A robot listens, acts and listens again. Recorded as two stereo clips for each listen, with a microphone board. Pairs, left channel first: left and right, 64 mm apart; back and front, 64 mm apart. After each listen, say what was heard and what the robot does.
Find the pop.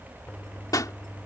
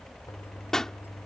The pop: 100° left. Turn 100° left.
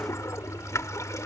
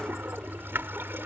Facing where the pop came from. I can't hear it now.